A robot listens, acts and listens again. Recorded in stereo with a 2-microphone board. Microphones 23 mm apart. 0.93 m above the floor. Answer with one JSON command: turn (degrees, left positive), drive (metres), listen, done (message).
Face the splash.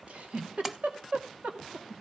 {"turn": -30}
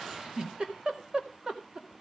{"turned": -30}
{"listen": true}
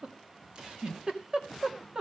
{"done": "I heard a splash, but can't make it out now. It was about 20° left or 140° right."}